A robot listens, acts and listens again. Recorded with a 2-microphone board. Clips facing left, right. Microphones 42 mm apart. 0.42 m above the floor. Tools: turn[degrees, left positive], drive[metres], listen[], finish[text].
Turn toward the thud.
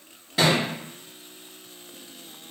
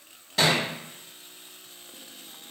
Action: turn[30]
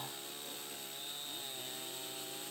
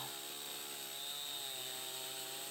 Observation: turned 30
Action: listen[]
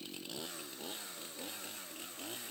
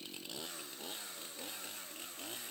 Action: finish[I heard a thud, but can't make it out now. It was about 20° right or 140° left.]